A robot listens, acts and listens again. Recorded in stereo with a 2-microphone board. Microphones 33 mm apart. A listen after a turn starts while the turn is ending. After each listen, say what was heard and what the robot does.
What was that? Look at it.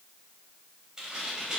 The tearing paper: about 15° right or 165° right. Turn 15° right.
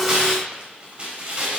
So it is at 150° right. Turn 150° right.
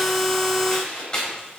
The tearing paper is now 15° left. Turn 15° left.
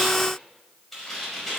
Found it: tearing paper, straight ahead.